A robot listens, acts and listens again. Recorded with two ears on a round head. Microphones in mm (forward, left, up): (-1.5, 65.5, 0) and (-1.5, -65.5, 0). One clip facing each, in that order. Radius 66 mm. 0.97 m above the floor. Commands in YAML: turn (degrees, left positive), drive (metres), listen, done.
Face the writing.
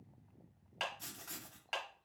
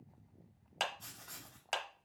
turn: 65
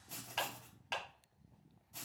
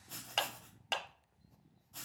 done: "Found it: writing, straight ahead."